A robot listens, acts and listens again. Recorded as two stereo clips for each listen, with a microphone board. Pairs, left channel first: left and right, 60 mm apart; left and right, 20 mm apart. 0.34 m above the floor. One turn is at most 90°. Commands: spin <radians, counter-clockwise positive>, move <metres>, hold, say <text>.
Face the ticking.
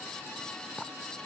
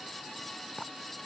hold
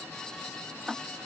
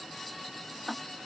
spin -0.52
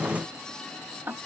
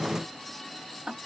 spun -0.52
spin -1.57
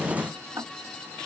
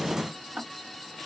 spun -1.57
spin -1.05
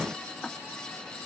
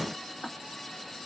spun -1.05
say Found it: ticking, straight ahead.